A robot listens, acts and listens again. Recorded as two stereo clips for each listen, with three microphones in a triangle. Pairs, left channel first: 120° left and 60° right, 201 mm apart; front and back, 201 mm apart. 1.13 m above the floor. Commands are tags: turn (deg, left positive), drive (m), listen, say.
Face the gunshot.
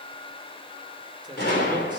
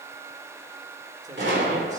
<turn deg="155"/>
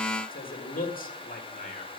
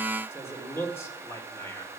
<say>I heard a gunshot from this way, but can't make it out now.</say>